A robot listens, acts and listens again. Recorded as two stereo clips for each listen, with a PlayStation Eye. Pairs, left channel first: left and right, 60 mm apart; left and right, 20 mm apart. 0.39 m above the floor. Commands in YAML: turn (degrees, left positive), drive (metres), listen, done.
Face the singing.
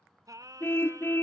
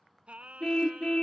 turn: -90
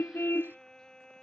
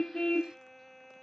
turn: 10
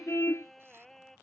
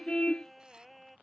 done: "Facing the singing."